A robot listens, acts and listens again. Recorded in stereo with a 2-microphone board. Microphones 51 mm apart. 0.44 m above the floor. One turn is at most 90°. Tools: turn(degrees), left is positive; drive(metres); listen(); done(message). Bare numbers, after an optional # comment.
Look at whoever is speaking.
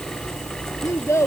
# The child speaking: about 65° left or 115° left.
turn(65)
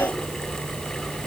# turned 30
listen()
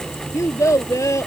# So it is at 80° left.
turn(80)
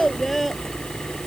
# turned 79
done("Facing the child speaking.")